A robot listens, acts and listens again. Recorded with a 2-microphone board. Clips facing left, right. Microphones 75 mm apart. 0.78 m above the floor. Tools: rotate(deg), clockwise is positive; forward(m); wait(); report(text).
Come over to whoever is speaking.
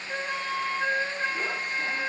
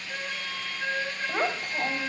rotate(90)
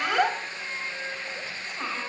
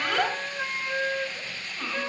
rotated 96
rotate(-10)
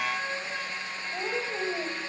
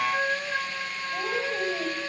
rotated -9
forward(1.0)
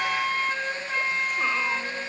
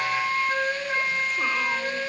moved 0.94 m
wait()
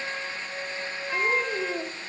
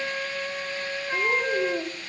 forward(1.0)
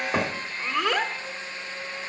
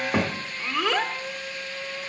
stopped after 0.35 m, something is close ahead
report("I am next to the child speaking.")